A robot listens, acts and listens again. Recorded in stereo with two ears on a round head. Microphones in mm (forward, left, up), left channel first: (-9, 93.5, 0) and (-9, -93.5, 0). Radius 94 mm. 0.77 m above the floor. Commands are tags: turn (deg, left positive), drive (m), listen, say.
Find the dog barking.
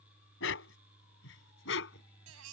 <turn deg="70"/>
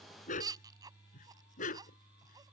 <turn deg="40"/>
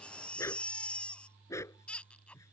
<turn deg="15"/>
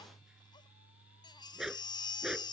<say>Facing the dog barking.</say>